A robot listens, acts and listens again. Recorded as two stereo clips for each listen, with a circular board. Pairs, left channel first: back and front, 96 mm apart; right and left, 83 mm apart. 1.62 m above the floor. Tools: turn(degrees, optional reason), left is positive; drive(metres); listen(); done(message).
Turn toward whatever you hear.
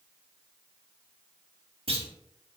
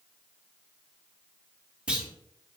turn(degrees=10, reason="The clunk: 10° left.")
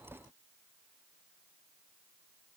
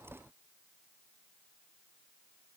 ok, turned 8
done("Facing where the clunk came from. I can't hear it now.")